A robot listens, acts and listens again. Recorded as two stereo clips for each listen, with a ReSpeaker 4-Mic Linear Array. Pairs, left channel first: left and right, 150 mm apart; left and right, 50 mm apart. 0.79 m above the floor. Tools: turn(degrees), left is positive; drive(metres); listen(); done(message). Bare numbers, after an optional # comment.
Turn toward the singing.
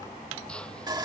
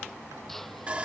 listen()
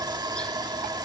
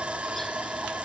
listen()
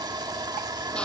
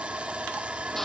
done("I can't make out singing, only sawing and a drill.")